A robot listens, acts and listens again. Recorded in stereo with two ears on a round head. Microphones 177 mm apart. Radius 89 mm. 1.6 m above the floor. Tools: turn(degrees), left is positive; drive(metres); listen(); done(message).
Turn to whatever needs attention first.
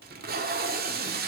listen()
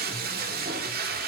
listen()
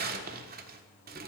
done("I can't make out anything urgent to turn to.")